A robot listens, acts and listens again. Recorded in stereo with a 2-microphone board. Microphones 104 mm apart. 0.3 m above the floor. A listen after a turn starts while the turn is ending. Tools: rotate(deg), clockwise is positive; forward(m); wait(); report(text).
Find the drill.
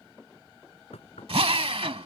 rotate(65)
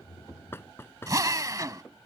rotate(35)
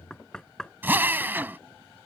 rotate(20)
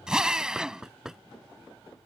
report("Facing the drill.")